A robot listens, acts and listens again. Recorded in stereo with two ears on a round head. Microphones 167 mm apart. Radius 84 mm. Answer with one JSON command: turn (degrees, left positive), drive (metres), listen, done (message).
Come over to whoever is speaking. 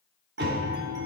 {"listen": true}
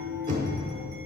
{"listen": true}
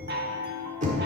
{"done": "I can't make out anyone speaking, only a chime and knocking."}